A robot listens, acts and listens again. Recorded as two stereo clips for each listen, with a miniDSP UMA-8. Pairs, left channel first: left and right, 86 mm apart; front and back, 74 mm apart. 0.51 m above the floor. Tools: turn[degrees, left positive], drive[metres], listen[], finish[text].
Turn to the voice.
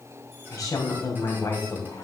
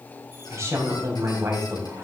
Thought: The woman speaking: 130° left.
Action: turn[130]
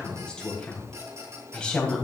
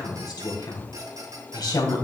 Thought: The woman speaking is now 15° left.
Action: turn[15]
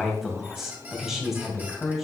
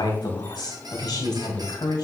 Action: finish[Facing the woman speaking, 2 to 4 m away.]